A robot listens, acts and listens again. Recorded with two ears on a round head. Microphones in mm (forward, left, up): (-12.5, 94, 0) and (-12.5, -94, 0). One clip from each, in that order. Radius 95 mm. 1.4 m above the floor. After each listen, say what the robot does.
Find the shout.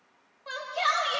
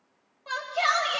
Turn 30° left.
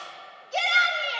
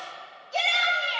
Turn 145° left.
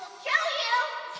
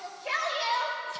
Turn 40° left.
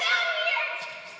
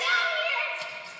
Facing the shout, 2 to 4 m away.